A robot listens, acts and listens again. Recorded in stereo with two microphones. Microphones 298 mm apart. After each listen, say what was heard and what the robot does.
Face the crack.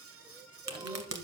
The crack: about 60° right or 120° right. Turn 60° right.
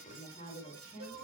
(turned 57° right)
Keep listening.
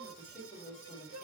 I heard a crack, but can't make it out now. It was about straight ahead or 65° right.